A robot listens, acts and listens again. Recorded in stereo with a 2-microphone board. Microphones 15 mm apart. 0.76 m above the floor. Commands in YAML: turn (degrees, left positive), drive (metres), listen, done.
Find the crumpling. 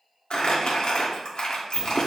turn: 55
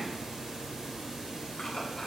listen: true
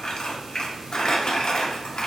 turn: 65
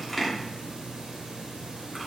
done: "Found it: crumpling, straight ahead."